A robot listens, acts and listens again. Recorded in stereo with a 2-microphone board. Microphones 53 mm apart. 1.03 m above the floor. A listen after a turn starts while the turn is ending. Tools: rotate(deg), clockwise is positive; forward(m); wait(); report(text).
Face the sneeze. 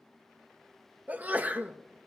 rotate(35)
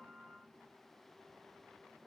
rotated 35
wait()
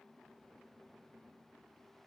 report("I heard a sneeze, but can't make it out now. It was about straight ahead or 110° right.")